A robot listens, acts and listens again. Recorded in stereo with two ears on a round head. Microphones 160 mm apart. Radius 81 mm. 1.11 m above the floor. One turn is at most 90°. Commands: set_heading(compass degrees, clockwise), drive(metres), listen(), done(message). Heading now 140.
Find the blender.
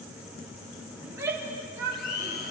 set_heading(75)
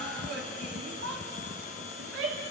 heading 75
set_heading(30)
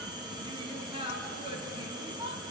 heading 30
listen()
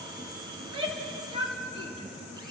listen()
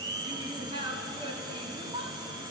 set_heading(55)
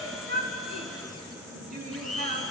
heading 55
done("Found it: a blender, straight ahead.")